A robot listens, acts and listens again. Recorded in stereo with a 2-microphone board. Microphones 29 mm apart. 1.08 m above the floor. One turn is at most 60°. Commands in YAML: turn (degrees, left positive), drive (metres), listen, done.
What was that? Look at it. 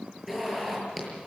turn: -30
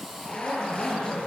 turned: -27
turn: 20
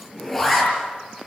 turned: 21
done: "Found it: a zipper, straight ahead, over 4 m away."